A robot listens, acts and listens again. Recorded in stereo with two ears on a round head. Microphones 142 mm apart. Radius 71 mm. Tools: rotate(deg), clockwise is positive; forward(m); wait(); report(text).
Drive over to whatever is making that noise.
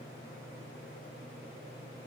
wait()
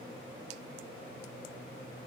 wait()
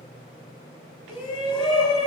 rotate(-30)
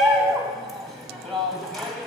forward(1.0)
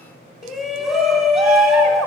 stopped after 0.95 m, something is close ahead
report("Arrived at the shout, straight ahead.")